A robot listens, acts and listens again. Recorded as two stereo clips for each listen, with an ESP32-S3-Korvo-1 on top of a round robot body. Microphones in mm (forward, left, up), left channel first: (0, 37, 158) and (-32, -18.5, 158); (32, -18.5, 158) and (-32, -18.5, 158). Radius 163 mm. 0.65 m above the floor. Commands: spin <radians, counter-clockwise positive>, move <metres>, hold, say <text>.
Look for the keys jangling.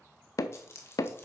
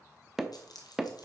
spin 0.17
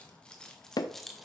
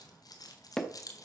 spin -0.52
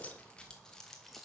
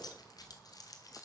spin -0.52
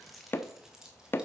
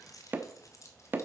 spin -0.70
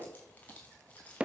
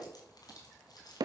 say Found it: keys jangling, straight ahead.